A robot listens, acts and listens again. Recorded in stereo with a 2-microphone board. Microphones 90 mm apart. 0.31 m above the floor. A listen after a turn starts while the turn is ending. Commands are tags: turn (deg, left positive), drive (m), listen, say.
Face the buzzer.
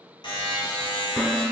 <turn deg="60"/>
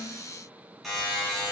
<say>Facing the buzzer, 1 to 2 m away.</say>